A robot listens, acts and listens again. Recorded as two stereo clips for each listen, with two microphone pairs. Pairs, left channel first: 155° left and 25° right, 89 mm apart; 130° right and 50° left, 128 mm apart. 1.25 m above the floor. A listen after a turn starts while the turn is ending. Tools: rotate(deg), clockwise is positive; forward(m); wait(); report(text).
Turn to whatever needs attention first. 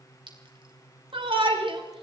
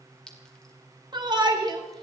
report("Found it: a shout, straight ahead.")